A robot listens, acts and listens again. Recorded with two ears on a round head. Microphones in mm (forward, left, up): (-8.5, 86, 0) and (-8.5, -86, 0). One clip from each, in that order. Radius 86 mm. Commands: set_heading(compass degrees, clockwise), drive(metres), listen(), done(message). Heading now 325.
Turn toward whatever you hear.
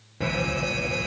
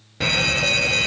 set_heading(35)
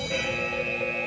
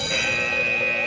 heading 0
set_heading(45)
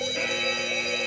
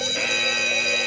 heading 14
set_heading(44)
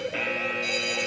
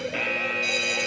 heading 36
set_heading(46)
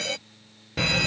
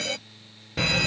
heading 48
done("Found it: a fire alarm, straight ahead.")